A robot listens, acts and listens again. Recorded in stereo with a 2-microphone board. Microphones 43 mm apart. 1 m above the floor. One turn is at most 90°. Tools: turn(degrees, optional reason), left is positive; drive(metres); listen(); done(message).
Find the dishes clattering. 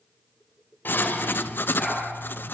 turn(degrees=50, reason="The dishes clattering: about 50° left or 130° left.")
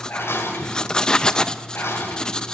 turn(degrees=80, reason="So it is at 80° left.")
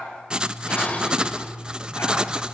turn(degrees=35, reason="The dishes clattering is now 35° left.")
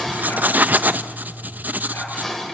turn(degrees=10, reason="The dishes clattering is now 10° left.")
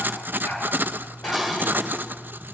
done("Facing the dishes clattering, 2 to 4 m away.")